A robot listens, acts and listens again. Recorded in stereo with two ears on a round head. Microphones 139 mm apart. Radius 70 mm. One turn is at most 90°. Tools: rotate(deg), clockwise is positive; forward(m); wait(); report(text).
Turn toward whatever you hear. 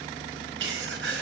rotate(90)
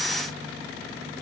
report("Facing where the sneeze came from. I can't hear it now.")